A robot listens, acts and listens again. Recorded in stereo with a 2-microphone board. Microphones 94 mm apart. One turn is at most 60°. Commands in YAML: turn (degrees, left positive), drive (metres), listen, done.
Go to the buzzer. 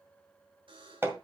turn: -60
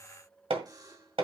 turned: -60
turn: -45
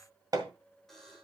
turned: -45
drive: 1.0
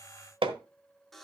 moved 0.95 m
drive: 1.0
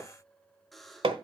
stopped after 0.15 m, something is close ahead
done: "Arrived at the buzzer, straight ahead."